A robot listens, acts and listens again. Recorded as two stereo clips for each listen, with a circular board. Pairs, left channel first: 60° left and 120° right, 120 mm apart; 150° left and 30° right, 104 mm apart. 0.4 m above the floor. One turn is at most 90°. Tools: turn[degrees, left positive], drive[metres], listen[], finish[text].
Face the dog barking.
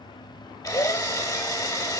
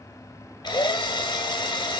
Action: listen[]
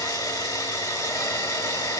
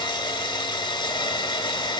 Action: listen[]
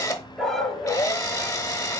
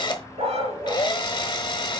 Thought: The dog barking: 25° right.
Action: turn[-25]
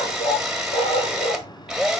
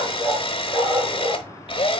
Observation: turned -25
Thought: The dog barking is now 40° left.
Action: turn[40]
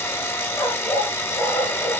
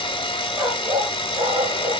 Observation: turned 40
Thought: The dog barking is now 15° left.
Action: turn[15]
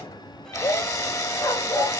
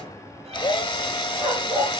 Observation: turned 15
Action: finish[Found it: a dog barking, straight ahead, 2 to 4 m away.]